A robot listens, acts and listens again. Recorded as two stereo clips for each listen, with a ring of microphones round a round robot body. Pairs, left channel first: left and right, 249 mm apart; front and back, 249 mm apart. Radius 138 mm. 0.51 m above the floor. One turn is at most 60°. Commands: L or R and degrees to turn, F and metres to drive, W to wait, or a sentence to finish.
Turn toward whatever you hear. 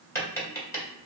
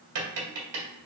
L60
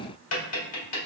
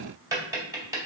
L60
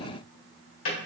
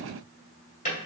L60
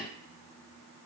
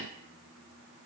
W
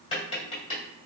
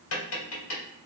L20
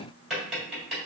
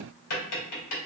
Facing the tapping, 1 to 2 m away.